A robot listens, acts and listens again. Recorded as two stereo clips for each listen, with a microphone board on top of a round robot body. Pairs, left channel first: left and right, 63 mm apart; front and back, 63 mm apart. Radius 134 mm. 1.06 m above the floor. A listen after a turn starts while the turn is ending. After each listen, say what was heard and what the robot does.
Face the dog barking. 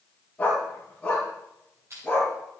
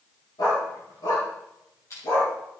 The dog barking: 10° left. Turn 10° left.
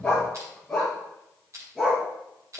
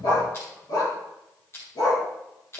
Found it: a dog barking, straight ahead.